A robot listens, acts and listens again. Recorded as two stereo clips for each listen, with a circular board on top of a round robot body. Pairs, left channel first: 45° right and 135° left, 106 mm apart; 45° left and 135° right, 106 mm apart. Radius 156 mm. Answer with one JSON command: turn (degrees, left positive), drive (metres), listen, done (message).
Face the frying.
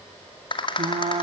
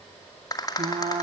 {"turn": 180}
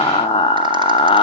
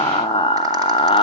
{"done": "Facing the frying, under 1 m away."}